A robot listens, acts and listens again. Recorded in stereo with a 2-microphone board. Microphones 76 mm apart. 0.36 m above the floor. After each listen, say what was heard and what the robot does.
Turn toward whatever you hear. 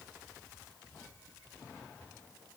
Keep listening.
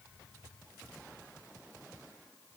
Keep listening.
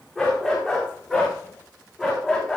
Turn 30° right.
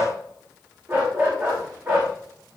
So it is at 145° right. Turn 145° right.
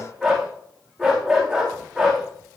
Found it: a dog barking, straight ahead.